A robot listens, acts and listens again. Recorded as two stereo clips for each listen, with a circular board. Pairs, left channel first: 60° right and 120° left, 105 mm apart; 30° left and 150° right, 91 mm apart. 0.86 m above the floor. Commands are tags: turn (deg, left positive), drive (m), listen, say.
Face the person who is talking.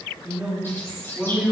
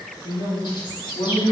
<turn deg="40"/>
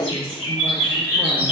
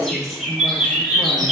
<listen/>
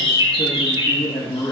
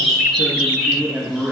<turn deg="-80"/>
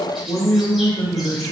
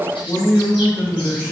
<turn deg="-30"/>
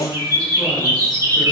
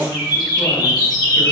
<listen/>
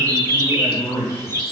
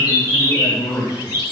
<say>Found it: a man speaking, straight ahead, 1 to 2 m away.</say>